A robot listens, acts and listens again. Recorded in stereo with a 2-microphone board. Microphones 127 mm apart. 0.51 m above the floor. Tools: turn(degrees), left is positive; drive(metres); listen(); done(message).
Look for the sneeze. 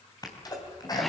turn(degrees=30)
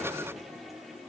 listen()
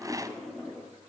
done("I heard a sneeze, but can't make it out now. It was about straight ahead or 120° left.")